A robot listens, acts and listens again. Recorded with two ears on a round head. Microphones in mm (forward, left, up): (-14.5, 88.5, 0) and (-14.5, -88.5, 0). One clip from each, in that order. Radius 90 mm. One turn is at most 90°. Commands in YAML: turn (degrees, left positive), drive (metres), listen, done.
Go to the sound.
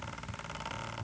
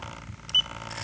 listen: true
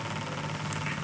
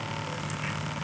listen: true
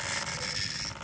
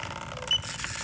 done: "I can't make out anything to turn to."